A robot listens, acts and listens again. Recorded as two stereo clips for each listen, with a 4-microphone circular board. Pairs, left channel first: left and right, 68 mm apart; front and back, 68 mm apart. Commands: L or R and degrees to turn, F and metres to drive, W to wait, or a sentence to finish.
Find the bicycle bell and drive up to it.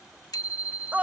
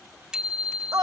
L100
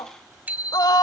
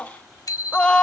R25
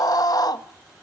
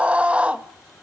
W
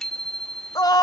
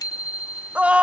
F1.0
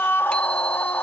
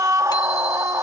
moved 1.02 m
W
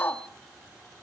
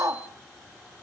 W
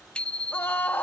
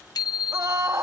L15
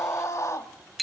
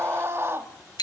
F1.0
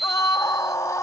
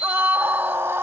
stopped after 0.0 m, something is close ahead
Arrived at the bicycle bell, straight ahead.